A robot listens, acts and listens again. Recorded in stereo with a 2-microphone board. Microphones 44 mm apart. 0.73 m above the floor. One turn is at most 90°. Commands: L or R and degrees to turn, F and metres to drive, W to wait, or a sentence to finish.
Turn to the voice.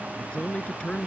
L25
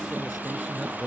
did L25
Facing the man speaking.